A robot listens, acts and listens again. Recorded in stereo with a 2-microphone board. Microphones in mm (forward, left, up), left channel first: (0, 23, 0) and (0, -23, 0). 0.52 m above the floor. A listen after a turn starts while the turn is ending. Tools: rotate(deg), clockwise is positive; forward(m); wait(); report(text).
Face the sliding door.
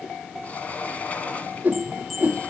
rotate(-35)
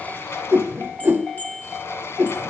rotate(-110)
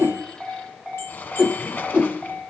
rotate(-40)
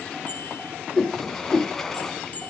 report("Found it: a sliding door, straight ahead, 1 to 2 m away.")